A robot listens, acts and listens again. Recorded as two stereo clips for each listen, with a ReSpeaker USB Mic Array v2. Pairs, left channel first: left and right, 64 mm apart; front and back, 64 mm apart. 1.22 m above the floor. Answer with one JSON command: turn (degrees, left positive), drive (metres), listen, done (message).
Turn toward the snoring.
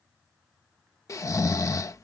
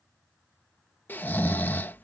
{"turn": 60}
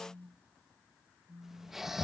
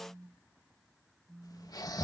{"done": "Found it: snoring, straight ahead."}